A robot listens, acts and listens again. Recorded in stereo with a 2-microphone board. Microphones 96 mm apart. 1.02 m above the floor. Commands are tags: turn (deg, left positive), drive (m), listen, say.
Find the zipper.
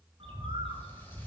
<listen/>
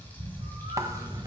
<turn deg="-35"/>
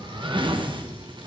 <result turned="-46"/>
<turn deg="-90"/>
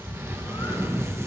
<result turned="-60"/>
<turn deg="-30"/>
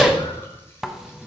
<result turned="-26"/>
<say>Facing the zipper, under 1 m away.</say>